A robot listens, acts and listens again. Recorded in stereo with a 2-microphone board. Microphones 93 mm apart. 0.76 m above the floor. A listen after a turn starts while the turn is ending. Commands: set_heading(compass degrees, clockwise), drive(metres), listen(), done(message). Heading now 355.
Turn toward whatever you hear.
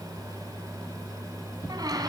set_heading(40)
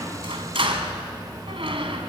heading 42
set_heading(127)
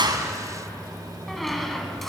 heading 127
done("Found it: a squeak, straight ahead, 2 to 4 m away.")